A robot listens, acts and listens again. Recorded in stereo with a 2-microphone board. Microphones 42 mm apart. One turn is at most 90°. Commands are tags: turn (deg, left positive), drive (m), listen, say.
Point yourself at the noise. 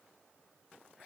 <listen/>
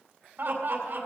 <turn deg="-60"/>
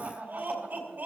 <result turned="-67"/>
<turn deg="-55"/>
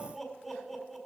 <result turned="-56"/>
<say>Facing the laughter, 2 to 4 m away.</say>